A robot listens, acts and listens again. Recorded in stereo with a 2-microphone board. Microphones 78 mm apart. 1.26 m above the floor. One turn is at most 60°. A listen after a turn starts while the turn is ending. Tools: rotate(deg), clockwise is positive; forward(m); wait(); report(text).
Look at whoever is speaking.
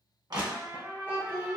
rotate(-25)
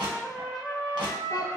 rotate(-60)
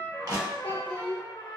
rotate(-60)
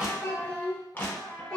rotate(-10)
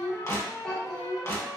report("Facing the child speaking, 1 to 2 m away.")